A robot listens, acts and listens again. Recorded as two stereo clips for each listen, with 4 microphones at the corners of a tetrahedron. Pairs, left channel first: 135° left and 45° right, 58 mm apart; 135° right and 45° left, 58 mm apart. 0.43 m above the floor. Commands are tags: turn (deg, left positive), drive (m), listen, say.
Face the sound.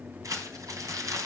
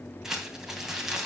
<turn deg="-35"/>
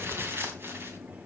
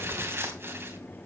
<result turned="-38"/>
<say>Facing the crumpling, 2 to 4 m away.</say>